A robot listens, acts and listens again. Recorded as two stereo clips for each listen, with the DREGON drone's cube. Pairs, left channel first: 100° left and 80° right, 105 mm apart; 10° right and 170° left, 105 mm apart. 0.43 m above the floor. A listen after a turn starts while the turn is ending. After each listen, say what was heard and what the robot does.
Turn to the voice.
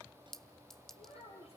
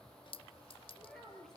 The child speaking: 75° left. Turn 75° left.
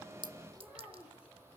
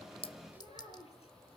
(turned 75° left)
Facing the child speaking.